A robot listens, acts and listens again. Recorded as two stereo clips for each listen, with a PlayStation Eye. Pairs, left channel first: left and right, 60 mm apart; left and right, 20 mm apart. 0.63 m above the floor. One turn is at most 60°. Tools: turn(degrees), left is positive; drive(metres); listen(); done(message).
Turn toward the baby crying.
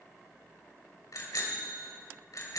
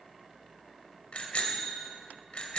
listen()
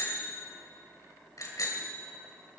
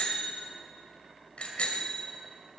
listen()
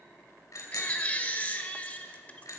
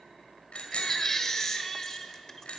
turn(degrees=25)
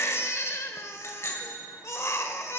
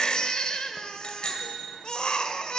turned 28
turn(degrees=60)
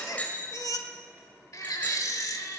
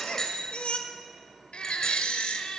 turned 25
turn(degrees=60)
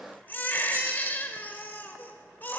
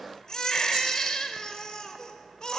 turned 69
turn(degrees=35)
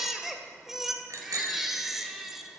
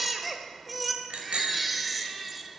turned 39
done("Facing the baby crying, under 1 m away.")